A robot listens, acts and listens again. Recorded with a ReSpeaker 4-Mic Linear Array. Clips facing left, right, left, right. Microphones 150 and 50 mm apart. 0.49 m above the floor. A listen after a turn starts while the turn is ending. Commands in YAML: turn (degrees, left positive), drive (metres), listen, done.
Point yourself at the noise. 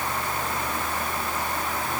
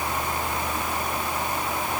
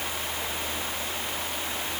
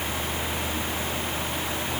listen: true
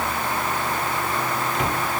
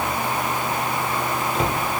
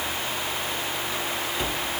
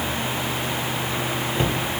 turn: -30
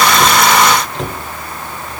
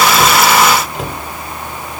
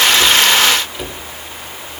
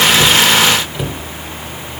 done: "Found it: a cupboard door, straight ahead."